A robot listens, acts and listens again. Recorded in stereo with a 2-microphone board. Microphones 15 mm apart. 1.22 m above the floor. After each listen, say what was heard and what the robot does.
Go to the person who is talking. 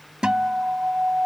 Keep listening.
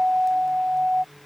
Keep listening.
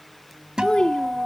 Turn 90° left.
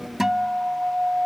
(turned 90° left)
Drive 1.0 m forward.
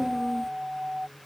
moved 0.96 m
Keep listening.
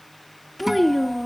The child speaking is now 10° left. Turn 10° left.
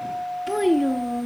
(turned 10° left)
Drive 1.0 m forward.
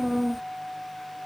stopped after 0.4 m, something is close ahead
The child speaking is now 10° right. Turn 10° right.
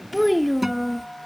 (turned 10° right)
I am next to the child speaking.